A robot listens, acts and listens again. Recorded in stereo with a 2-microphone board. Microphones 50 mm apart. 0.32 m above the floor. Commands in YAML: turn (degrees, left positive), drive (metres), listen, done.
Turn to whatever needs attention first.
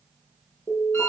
turn: 50
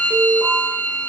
done: "Facing the alarm, over 4 m away."